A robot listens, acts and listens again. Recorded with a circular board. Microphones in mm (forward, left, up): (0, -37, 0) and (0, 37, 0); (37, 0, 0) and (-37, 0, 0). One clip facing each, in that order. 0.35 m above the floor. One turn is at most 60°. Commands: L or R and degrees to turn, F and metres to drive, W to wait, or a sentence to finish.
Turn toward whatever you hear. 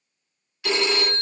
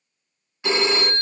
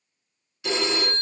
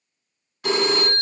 L60
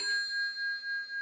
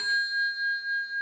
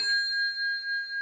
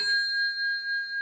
L60
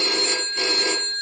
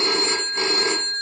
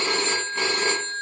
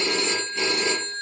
L40
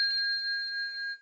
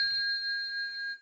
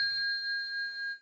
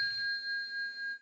Found it: a phone ringing, straight ahead.